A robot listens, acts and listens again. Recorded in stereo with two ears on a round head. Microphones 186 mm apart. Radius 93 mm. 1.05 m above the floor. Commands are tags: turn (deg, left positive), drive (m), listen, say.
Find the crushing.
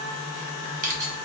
<turn deg="-40"/>
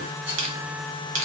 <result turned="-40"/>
<turn deg="-95"/>
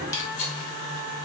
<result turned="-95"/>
<turn deg="20"/>
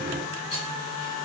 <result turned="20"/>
<listen/>
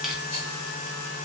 <listen/>
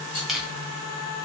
<say>Found it: crushing, straight ahead, under 1 m away.</say>